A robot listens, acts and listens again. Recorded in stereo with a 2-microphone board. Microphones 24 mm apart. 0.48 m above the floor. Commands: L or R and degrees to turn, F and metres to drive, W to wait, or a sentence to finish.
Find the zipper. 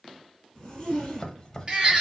L20
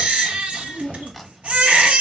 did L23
L135
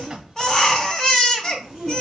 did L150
R15
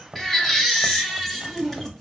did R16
Found it: a zipper, straight ahead, 1 to 2 m away.